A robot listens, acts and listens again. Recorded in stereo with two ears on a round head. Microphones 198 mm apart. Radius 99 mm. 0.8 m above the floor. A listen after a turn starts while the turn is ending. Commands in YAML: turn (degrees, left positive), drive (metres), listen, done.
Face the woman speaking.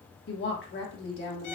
turn: 55
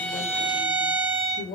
turn: 50
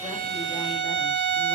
listen: true
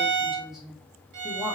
done: "Found it: a woman speaking, straight ahead."